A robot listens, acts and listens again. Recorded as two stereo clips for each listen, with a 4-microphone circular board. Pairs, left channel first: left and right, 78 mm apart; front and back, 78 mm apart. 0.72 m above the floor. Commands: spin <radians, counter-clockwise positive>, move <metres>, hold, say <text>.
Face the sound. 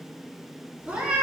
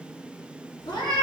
spin -0.17
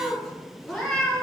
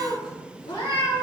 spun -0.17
spin 0.26
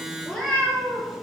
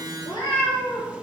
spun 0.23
spin 0.17
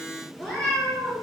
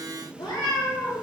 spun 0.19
spin 0.17
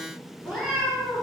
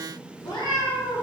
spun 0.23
say Found it: a cat meowing, straight ahead.